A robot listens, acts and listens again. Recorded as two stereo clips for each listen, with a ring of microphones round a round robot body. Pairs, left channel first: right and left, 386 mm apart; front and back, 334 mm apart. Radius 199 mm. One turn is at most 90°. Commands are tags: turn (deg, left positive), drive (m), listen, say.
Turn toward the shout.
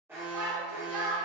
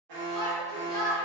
<turn deg="80"/>
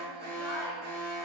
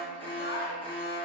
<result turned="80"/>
<listen/>
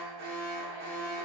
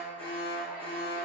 <listen/>
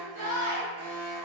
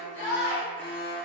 <turn deg="-20"/>
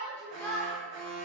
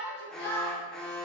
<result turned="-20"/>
<turn deg="-10"/>
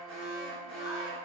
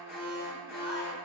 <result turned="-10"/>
<listen/>
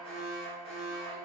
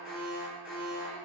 <listen/>
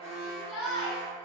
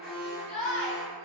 <say>Found it: a shout, straight ahead, under 1 m away.</say>